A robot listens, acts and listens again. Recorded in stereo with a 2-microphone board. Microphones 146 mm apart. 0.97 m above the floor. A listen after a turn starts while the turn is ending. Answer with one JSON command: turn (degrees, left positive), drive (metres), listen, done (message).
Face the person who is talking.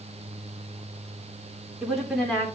{"turn": 30}
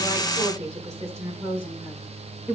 {"turn": -10}
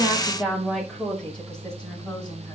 {"done": "Facing the woman speaking, over 4 m away."}